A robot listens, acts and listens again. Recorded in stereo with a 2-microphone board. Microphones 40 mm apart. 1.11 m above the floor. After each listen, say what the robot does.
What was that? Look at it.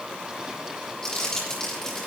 Turn 20° left.
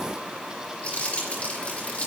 Turn 140° left.
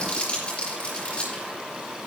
Turn 25° left.
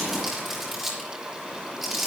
Turn 10° right.
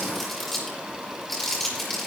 Facing the crumpling.